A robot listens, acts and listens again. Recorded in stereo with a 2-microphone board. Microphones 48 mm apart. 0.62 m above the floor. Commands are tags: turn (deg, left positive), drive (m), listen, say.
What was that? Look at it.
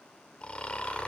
<turn deg="25"/>
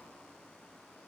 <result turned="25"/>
<listen/>
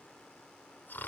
<turn deg="130"/>
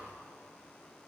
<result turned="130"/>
<listen/>
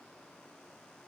<listen/>
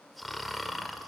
<say>Facing the snoring, 1 to 2 m away.</say>